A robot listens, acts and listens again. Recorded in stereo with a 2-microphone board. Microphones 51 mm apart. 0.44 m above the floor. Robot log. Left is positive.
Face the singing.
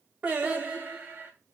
note: The singing: about 30° right or 150° right.
cmd yaw -30
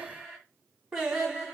note: So it is at 10° right.
cmd yaw -10
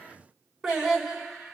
end: Found it: singing, straight ahead.